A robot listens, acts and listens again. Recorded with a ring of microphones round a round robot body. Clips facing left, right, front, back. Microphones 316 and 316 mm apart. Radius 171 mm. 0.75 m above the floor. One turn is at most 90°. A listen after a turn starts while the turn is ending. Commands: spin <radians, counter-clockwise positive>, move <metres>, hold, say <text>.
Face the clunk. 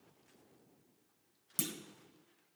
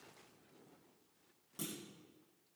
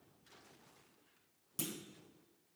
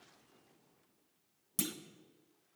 spin 1.57
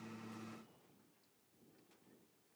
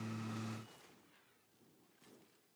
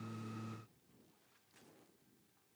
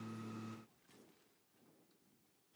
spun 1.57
spin 0.79
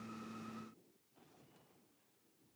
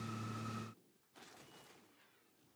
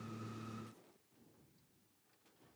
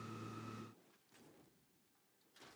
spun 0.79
say Facing where the clunk came from. I can't hear it now.